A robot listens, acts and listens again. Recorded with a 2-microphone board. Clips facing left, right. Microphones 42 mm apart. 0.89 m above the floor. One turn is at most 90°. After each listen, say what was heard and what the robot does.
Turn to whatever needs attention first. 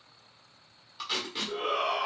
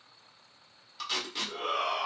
Turn 30° left.
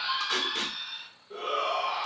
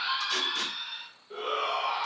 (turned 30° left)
So it is at 15° right. Turn 15° right.
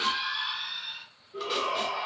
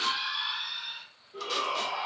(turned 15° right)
Facing the shout.